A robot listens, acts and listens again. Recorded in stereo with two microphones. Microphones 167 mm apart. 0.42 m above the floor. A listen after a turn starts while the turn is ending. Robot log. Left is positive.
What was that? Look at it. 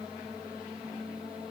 cmd idle
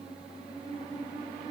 cmd idle
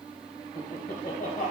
note: The laughter: about 55° left or 125° left.
cmd yaw +55
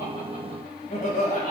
note: So it is at 60° left.
cmd yaw +60
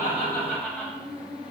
note: The laughter is now 10° left.
cmd yaw +10
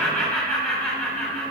note: The laughter is now 10° left.
cmd yaw +10
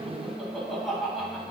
end: Found it: laughter, straight ahead.